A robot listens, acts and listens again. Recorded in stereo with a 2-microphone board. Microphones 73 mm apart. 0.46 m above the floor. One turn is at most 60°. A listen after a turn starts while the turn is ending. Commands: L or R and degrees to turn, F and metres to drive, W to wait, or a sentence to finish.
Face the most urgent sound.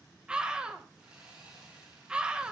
R30
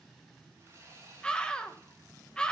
L15
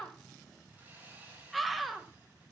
Facing the scream.